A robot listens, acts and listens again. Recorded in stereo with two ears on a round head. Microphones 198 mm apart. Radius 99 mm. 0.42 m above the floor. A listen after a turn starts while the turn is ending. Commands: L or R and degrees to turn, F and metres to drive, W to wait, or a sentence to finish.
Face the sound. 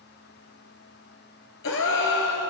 L65
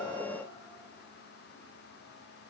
W
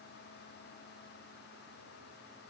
I heard a gasp, but can't make it out now. It was about straight ahead or 50° left.